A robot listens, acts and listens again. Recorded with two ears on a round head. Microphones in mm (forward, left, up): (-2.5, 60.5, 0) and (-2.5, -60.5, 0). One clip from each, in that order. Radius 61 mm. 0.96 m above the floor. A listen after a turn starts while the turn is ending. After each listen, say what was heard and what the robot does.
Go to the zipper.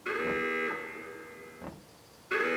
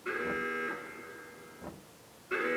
Keep listening.
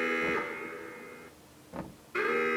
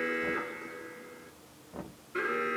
Keep listening.
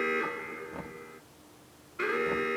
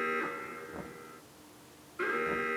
I can't make out a zipper, only an alarm and knocking.